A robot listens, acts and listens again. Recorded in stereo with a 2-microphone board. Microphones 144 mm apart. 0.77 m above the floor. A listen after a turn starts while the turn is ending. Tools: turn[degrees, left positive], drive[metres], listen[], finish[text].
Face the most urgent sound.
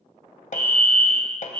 Thought: The fire alarm: about 45° right or 135° right.
Action: turn[-45]
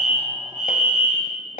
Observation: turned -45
Thought: So it is at 85° right.
Action: turn[-85]
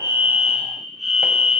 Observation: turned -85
Action: finish[Facing the fire alarm, 2 to 4 m away.]